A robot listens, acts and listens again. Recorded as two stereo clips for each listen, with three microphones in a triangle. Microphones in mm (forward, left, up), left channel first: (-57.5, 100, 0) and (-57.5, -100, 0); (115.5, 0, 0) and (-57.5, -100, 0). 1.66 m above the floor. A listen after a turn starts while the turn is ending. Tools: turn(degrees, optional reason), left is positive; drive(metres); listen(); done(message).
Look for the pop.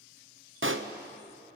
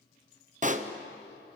turn(degrees=-95, reason="The pop: 95° right.")
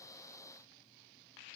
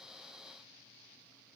done("I heard a pop from this way, but can't make it out now.")